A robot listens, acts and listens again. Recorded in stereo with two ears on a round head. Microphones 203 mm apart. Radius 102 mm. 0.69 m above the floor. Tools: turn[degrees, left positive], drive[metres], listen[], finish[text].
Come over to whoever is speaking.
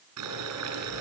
Action: listen[]
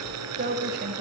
Thought: The woman speaking: about 45° right or 135° right.
Action: turn[-45]
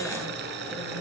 Action: listen[]
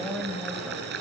Action: drive[1.0]
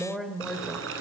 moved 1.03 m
Action: drive[1.0]
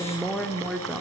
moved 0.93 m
Action: drive[1.0]
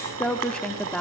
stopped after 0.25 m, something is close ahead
Action: finish[I am next to the woman speaking.]